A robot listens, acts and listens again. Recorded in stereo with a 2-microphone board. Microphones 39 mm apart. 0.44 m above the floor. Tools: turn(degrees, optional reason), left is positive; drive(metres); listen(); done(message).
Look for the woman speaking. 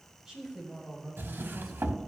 turn(degrees=30)
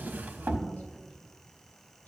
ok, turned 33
listen()
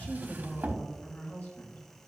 turn(degrees=115, reason="So it is at 115° left.")
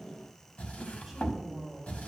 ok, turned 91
done("Facing the woman speaking, 2 to 4 m away.")